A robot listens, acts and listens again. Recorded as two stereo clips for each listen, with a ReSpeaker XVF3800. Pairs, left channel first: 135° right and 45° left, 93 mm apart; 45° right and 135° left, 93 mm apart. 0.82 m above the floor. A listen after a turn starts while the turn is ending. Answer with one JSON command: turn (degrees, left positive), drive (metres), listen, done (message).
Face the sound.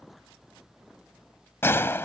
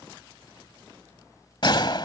{"turn": -70}
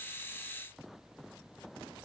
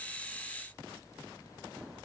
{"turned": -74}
{"done": "I heard a gunshot from this way, but can't make it out now."}